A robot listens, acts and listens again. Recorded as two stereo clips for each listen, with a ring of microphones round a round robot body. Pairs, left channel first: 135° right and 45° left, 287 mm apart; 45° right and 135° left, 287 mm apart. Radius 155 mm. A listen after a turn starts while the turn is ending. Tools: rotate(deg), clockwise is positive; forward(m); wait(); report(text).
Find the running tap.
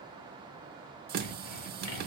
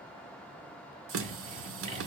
rotate(-100)
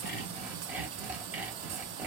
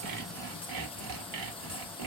rotate(-25)
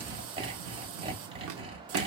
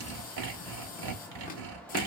rotate(-10)
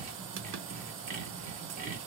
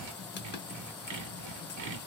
report("Facing the running tap.")